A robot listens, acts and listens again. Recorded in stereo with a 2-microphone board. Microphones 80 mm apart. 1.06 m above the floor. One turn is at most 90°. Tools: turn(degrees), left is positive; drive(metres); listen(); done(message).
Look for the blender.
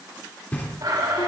turn(degrees=-75)
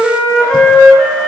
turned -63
listen()
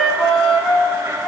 turn(degrees=-40)
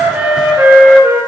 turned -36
listen()
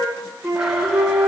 listen()
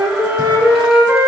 done("Facing where the blender came from. I can't hear it now.")